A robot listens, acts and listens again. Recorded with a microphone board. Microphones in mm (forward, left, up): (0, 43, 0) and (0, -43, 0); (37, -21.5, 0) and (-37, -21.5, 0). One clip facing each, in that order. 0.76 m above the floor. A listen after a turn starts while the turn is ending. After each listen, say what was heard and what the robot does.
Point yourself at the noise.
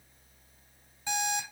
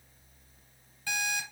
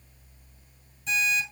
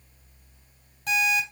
The alarm clock: 155° left. Turn 155° left.
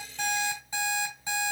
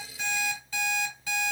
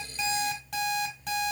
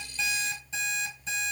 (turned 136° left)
The alarm clock is now 20° left. Turn 20° left.
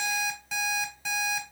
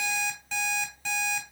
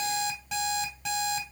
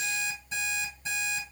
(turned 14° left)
Facing the alarm clock, 2 to 4 m away.